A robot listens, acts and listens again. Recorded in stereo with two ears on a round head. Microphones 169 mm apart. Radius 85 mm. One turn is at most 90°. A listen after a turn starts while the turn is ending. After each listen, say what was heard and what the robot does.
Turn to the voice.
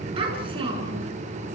The child speaking: about 30° right or 150° right. Turn 30° right.
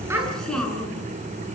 Facing the child speaking.